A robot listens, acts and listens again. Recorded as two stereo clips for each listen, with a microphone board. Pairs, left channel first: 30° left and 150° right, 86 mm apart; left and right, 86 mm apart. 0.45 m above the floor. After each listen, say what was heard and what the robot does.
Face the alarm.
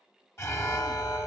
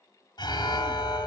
The alarm: 85° left. Turn 85° left.
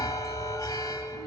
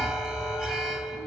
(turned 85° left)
Facing the alarm, under 1 m away.